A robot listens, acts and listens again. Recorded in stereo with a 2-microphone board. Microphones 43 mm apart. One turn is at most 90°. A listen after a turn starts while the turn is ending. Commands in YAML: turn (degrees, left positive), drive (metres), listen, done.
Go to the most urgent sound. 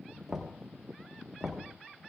listen: true
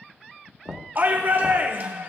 turn: -50
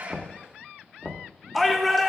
drive: 1.0
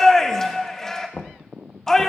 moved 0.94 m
turn: 15
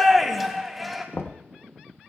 drive: 1.0
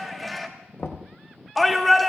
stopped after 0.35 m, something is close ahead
done: "I am next to the shout."